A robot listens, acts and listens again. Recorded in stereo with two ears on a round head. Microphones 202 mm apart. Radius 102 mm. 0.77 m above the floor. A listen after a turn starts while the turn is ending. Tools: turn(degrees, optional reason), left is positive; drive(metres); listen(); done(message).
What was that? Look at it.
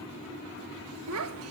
turn(degrees=-70, reason="The child speaking: about 70° right or 110° right.")
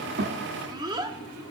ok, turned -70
turn(degrees=-20, reason="So it is at 20° right.")
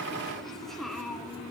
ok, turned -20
done("Facing the child speaking, 1 to 2 m away.")